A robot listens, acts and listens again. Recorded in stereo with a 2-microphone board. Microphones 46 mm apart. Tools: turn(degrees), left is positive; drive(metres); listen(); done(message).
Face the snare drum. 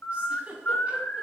listen()
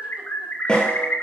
turn(degrees=20)
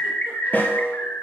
turn(degrees=140)
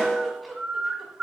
turn(degrees=10)
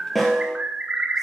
done("Facing the snare drum.")